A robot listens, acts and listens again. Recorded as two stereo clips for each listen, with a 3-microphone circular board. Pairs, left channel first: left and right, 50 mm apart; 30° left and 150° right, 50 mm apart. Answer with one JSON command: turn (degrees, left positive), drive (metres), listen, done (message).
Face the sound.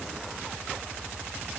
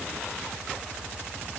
{"listen": true}
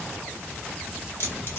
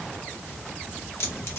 {"turn": 55}
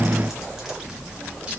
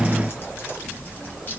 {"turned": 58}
{"turn": -20}
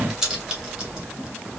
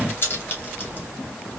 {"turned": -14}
{"turn": -20}
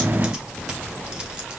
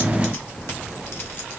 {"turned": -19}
{"turn": -15}
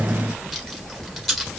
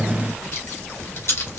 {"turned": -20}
{"done": "Facing the keys jangling."}